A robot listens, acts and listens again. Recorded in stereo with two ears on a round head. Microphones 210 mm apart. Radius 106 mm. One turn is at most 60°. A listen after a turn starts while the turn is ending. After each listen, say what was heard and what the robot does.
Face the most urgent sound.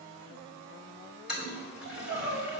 Turn 60° right.
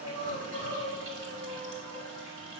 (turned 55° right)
So it is at 30° right. Turn 30° right.
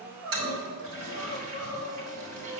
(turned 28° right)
Facing the crying, 2 to 4 m away.